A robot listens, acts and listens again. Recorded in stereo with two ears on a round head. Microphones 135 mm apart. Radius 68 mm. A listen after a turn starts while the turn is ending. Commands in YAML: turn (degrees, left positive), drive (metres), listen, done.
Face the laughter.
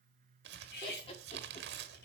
turn: 40
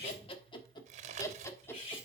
turn: 15
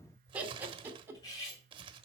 turn: -15
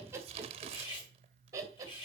turn: -20
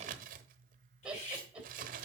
done: "Facing the laughter, 2 to 4 m away."